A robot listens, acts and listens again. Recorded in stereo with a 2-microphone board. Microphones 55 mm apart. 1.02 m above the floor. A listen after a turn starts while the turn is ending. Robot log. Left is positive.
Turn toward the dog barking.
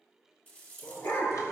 note: The dog barking: about 65° left or 115° left.
cmd yaw +65
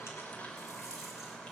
cmd idle
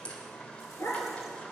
note: So it is at 55° left.
cmd yaw +55
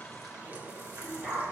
end: Found it: a dog barking, straight ahead.